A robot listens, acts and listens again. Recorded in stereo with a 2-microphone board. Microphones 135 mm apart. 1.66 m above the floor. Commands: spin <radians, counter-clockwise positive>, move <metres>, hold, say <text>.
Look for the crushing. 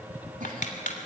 spin 1.22
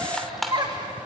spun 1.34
say Facing the crushing.